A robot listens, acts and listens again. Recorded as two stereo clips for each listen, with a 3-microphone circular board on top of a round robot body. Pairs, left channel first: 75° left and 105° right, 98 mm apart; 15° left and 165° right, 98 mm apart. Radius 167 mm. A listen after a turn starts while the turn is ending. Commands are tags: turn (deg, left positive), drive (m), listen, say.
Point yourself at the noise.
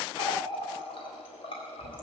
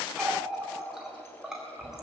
<turn deg="110"/>
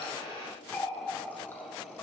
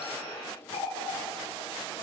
<say>Facing the running tap.</say>